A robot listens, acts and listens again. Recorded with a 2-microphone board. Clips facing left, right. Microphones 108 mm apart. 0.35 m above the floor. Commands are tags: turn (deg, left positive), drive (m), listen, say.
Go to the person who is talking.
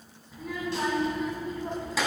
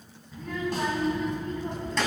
<turn deg="30"/>
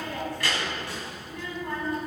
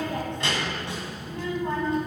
<turn deg="-25"/>
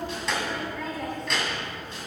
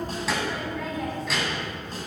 <drive m="1.0"/>
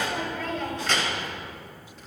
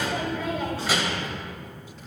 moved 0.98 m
<turn deg="-10"/>
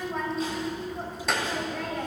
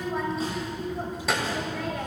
<drive m="1.0"/>
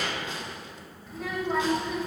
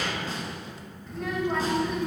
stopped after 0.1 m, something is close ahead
<say>Arrived at the child speaking, straight ahead.</say>